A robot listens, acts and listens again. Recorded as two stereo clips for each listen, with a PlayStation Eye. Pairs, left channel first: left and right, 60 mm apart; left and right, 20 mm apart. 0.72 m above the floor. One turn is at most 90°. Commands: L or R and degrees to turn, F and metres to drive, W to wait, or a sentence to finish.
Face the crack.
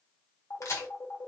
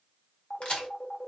L55
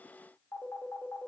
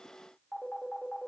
W
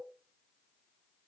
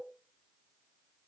I heard a crack, but can't make it out now. It was about straight ahead or 70° left.